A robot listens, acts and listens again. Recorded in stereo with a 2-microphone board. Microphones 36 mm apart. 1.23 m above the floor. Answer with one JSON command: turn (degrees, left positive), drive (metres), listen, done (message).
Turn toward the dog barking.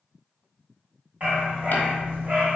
{"turn": -45}
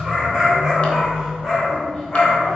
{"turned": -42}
{"turn": 15}
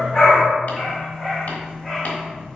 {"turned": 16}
{"turn": 10}
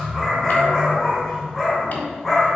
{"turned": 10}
{"done": "Found it: a dog barking, straight ahead."}